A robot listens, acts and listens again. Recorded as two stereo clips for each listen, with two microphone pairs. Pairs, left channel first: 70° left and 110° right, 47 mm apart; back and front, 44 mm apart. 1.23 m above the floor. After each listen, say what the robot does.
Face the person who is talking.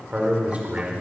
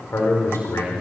Turn 170° right.
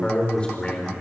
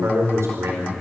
Facing the man speaking, over 4 m away.